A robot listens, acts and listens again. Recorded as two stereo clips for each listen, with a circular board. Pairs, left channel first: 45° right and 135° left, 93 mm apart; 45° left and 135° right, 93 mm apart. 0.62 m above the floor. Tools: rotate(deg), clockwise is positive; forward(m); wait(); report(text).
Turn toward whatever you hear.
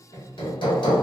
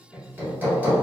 rotate(65)
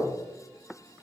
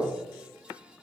wait()
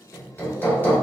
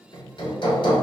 rotate(-20)
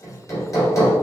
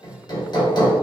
report("Found it: hammering, straight ahead.")